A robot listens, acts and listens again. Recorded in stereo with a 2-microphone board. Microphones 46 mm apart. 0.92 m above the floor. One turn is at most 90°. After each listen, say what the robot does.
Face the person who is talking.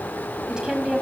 Turn 30° right.
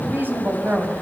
Turn 90° right.
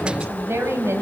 Turn 60° right.
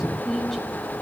Found it: a woman speaking, straight ahead, over 4 m away.